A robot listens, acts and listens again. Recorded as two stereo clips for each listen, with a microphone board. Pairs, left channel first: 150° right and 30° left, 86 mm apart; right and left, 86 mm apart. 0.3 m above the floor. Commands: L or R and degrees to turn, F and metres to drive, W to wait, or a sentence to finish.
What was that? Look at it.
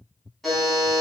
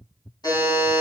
R60
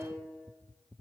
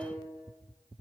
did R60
W
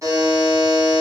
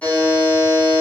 R15
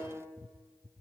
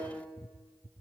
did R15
W
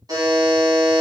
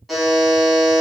Found it: a buzzer, straight ahead, 1 to 2 m away.